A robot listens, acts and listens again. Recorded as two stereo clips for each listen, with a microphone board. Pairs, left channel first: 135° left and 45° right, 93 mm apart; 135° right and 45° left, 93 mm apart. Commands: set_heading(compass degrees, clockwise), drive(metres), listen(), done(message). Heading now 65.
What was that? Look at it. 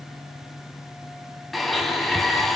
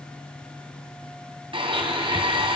set_heading(20)
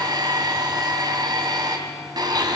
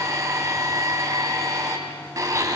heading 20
done("Found it: a blender, straight ahead, 2 to 4 m away.")